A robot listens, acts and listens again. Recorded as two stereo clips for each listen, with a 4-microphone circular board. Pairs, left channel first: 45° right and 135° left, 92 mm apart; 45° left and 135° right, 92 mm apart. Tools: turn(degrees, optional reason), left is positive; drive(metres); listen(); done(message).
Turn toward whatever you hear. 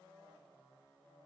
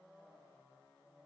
listen()
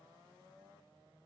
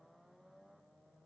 listen()
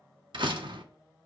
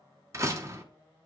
turn(degrees=170, reason="The door slam: 170° left.")
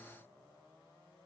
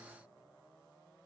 done("I heard a door slam from this way, but can't make it out now.")